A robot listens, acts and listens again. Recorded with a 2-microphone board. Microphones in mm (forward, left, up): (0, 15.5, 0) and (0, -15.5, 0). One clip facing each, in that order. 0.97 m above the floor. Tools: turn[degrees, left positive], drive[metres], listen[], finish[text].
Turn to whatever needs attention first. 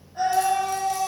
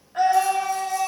Thought: The scream: about 75° right or 105° right.
Action: turn[-75]
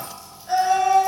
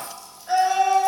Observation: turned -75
Thought: So it is at 15° right.
Action: turn[-15]
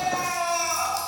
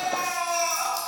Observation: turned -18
Action: finish[Found it: a scream, straight ahead, 2 to 4 m away.]